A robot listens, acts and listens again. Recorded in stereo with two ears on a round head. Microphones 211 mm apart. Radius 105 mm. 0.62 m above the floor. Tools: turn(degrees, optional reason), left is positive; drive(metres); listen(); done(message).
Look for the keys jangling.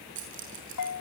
turn(degrees=-55, reason="The keys jangling: about 55° right or 125° right.")
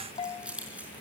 done("Facing the keys jangling.")